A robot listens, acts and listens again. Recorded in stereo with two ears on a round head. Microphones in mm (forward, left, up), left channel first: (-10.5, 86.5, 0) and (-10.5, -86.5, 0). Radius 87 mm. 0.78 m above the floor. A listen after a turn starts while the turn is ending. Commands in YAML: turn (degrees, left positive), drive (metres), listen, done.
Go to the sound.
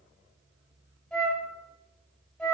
turn: 30
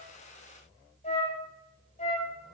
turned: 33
turn: 145
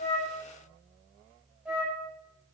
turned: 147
drive: 1.0
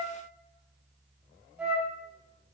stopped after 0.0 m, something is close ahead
done: "Something is in my way. I am facing the flute but have not reached it."